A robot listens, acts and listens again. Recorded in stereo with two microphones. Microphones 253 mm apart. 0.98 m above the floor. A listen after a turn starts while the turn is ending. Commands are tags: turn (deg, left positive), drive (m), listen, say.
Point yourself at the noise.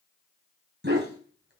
<turn deg="-45"/>
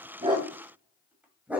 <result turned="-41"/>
<say>Facing the dog barking.</say>